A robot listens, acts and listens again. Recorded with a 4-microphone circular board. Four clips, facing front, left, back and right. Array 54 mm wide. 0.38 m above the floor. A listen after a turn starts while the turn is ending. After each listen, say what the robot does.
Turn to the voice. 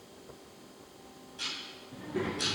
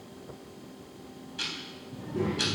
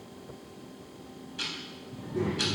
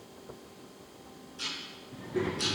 Turn 35° right.
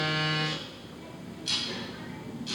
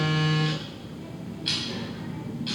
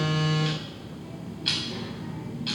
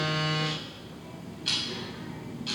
Found it: a child speaking, straight ahead.